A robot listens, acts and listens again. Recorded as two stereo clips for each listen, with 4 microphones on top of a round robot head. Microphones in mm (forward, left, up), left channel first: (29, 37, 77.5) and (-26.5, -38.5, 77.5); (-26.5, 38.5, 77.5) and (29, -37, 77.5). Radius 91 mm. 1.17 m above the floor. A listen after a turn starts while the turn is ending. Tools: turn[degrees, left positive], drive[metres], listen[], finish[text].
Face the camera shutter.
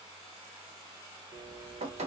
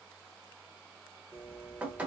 Action: listen[]
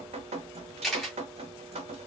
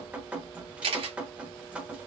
Thought: The camera shutter: 35° right.
Action: turn[-35]
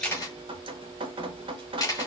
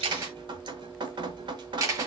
Action: finish[Facing the camera shutter, 1 to 2 m away.]